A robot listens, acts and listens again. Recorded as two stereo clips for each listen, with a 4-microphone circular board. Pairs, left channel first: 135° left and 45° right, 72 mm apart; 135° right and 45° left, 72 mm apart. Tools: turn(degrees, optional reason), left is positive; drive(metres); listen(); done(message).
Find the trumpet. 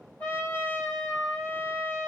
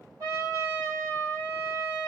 turn(degrees=70, reason="The trumpet: 70° left.")
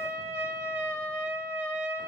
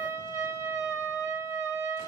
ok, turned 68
done("Facing the trumpet.")